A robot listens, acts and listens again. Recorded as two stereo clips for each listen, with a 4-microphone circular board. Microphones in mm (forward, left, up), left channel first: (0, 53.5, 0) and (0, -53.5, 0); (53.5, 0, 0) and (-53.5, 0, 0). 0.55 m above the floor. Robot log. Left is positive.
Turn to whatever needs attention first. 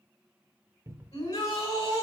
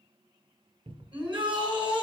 note: The shout: 140° left.
cmd yaw +140
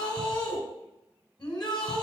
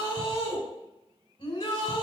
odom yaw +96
note: The shout is now 45° left.
cmd yaw +45
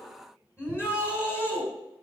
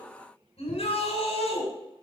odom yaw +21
note: The shout is now 25° left.
cmd yaw +25
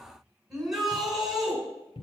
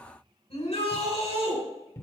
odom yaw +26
end: Found it: a shout, straight ahead.